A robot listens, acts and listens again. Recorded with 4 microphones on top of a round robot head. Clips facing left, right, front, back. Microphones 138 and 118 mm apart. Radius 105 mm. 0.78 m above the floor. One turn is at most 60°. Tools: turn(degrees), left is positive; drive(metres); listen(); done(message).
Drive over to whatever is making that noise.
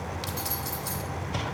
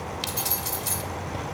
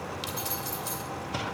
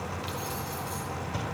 turn(degrees=-25)
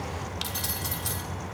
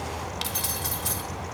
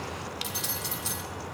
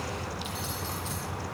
drive(metres=1.0)
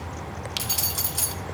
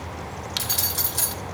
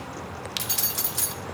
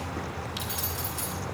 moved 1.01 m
turn(degrees=10)
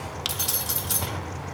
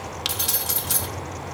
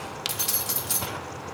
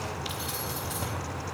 drive(metres=1.0)
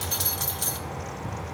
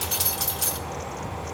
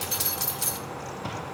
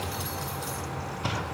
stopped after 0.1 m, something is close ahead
done("I am next to the keys jangling.")